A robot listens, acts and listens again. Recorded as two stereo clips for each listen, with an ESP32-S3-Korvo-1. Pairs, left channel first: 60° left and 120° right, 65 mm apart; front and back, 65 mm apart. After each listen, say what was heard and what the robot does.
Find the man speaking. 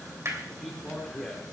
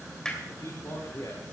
The man speaking: 20° right. Turn 20° right.
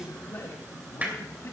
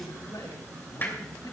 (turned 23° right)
The man speaking is now 10° left. Turn 10° left.
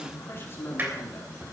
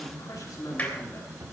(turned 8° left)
The man speaking is now 10° left. Turn 10° left.
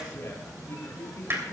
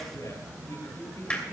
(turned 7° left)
The man speaking is now 20° left. Turn 20° left.
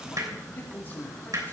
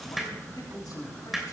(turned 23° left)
Facing the man speaking.